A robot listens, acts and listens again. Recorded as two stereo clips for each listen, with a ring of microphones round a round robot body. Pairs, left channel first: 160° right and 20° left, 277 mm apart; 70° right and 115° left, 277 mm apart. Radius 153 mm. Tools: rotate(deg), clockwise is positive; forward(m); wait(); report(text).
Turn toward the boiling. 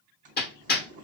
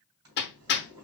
rotate(-85)
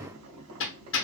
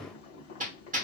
report("Found it: boiling, straight ahead.")